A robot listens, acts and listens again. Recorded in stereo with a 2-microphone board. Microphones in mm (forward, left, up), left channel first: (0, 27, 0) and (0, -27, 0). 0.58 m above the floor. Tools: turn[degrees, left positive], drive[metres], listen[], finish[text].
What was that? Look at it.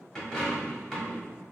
Action: turn[30]
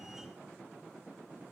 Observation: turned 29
Action: listen[]
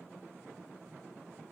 Action: finish[I heard a dropped coin, but can't make it out now. It was about 20° right or 140° left.]